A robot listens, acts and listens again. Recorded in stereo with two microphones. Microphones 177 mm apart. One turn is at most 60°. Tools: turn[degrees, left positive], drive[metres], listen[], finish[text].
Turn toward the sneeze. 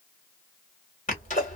Thought: The sneeze: about 45° left or 135° left.
Action: turn[45]
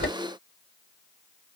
Thought: So it is at 90° left.
Action: turn[60]
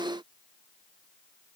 Thought: Nothing new. It was at 30° left.
Action: turn[30]
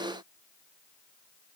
Action: finish[Facing where the sneeze came from. I can't hear it now.]